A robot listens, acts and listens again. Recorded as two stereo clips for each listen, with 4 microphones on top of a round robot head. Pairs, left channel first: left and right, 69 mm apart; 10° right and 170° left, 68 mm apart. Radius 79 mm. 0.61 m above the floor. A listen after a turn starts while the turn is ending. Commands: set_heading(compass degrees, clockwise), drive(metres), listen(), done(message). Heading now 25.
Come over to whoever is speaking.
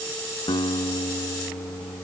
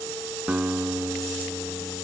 listen()
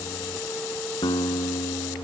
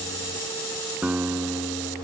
listen()
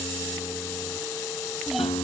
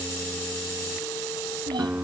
set_heading(205)
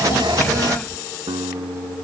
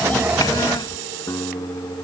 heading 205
listen()
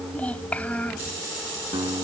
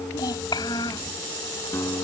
set_heading(190)
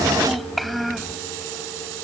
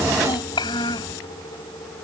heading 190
drive(1.0)
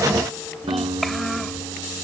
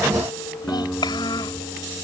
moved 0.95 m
drive(1.0)
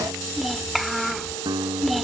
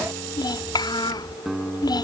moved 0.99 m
drive(1.0)
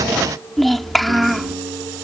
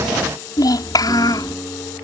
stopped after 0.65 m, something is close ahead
done("I am next to the child speaking.")